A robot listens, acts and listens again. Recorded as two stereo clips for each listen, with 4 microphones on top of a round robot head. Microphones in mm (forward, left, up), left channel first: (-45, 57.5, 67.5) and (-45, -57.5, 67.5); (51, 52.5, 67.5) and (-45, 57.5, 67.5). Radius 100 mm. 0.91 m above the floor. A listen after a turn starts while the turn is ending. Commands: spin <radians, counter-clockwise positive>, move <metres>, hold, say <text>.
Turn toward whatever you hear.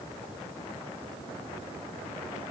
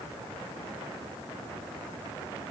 hold
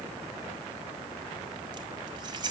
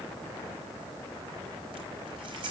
spin -2.44
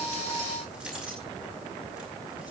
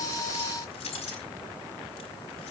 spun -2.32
say Found it: keys jangling, straight ahead, over 4 m away.